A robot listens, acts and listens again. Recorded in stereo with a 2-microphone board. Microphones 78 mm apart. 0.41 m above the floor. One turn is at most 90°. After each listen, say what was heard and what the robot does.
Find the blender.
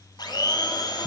The blender: about 60° left or 120° left. Turn 60° left.
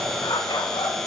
Found it: a blender, straight ahead.